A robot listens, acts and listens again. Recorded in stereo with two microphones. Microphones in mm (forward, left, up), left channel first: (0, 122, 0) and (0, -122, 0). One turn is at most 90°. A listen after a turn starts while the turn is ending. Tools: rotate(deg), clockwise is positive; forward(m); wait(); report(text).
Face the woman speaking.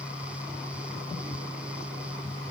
wait()
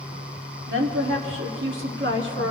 rotate(55)
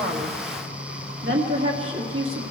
rotate(65)
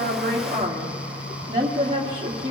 rotate(25)
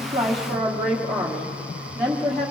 report("Found it: a woman speaking, straight ahead, 2 to 4 m away.")